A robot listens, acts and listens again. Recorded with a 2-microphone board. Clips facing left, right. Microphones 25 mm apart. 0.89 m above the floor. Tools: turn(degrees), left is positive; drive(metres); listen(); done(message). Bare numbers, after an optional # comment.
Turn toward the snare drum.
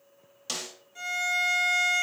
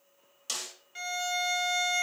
turn(30)
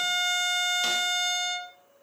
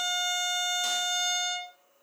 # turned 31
listen()
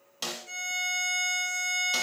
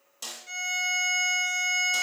# So it is at 135° left.
turn(135)
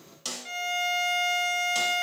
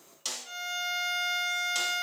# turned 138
done("Facing the snare drum.")